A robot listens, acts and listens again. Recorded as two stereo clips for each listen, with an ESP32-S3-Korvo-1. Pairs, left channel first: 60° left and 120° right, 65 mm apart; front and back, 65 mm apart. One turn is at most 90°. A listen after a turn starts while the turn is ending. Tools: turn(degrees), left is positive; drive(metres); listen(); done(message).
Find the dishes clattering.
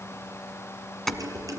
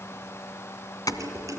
turn(degrees=-90)
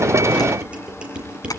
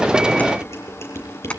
turn(degrees=-50)
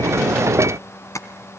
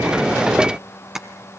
listen()
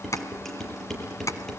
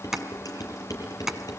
turn(degrees=-25)
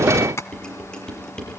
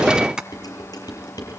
turn(degrees=-20)
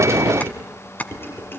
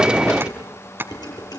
done("Facing the dishes clattering.")